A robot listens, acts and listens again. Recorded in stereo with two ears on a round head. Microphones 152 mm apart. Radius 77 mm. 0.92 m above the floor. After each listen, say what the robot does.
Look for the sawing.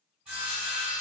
Turn 30° right.
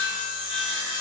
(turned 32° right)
Turn 25° left.
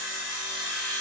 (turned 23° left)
Facing the sawing, 1 to 2 m away.